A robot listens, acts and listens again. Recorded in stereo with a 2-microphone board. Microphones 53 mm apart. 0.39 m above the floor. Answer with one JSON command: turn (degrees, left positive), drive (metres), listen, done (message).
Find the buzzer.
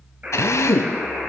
{"turn": -35}
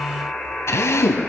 {"done": "Facing the buzzer, over 4 m away."}